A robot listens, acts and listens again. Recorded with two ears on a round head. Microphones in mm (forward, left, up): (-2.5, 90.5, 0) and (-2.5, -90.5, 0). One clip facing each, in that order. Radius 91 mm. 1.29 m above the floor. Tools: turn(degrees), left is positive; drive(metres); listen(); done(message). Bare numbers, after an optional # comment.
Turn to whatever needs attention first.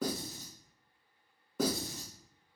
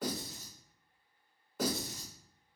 listen()
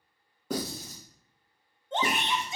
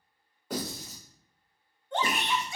# The shout: about 20° left or 160° left.
turn(20)
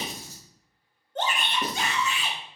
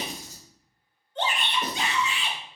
# So it is at 140° left.
turn(140)
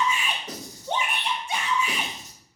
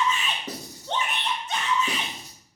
# The shout is now 10° left.
turn(10)
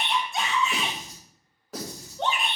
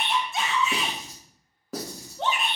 done("Facing the shout.")